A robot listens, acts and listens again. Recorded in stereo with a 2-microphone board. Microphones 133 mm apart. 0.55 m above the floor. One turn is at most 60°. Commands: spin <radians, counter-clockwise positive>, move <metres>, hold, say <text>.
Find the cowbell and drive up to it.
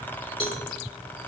spin 0.70
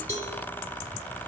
spin 1.05
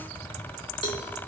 spin 0.61
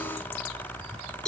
move 1.0
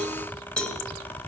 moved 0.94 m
move 1.0
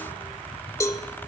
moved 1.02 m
spin 0.44
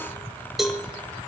move 1.0
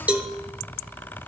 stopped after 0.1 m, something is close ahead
spin -0.17
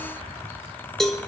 say I am next to the cowbell.